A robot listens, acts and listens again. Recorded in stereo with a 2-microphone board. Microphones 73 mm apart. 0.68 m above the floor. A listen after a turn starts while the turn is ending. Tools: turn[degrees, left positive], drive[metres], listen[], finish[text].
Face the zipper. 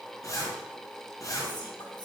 Thought: The zipper: about 50° left or 130° left.
Action: turn[50]
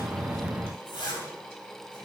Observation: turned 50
Thought: So it is at 85° left.
Action: turn[85]
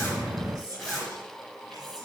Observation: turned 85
Action: finish[Found it: a zipper, straight ahead, 2 to 4 m away.]